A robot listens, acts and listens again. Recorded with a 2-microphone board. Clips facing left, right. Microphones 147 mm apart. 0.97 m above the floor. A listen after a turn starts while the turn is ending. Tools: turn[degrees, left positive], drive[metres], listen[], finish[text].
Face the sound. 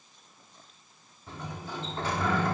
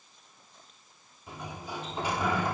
Action: turn[-30]
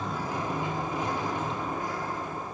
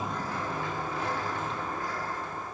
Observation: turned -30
Thought: So it is at 20° left.
Action: turn[20]
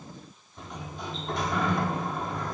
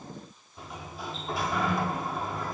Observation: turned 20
Action: finish[Found it: a sliding door, straight ahead, 1 to 2 m away.]